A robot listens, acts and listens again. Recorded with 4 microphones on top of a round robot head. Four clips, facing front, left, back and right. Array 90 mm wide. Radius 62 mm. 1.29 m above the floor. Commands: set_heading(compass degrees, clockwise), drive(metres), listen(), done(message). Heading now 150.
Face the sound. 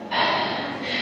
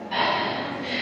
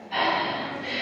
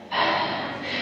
set_heading(135)
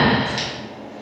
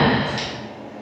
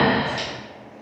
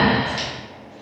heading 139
done("Found it: breathing, straight ahead.")